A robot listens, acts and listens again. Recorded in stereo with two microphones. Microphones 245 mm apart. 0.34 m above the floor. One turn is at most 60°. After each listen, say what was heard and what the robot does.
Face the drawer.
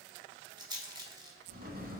The drawer: about 35° right or 145° right. Turn 35° right.
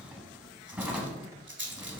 Found it: a drawer, straight ahead, under 1 m away.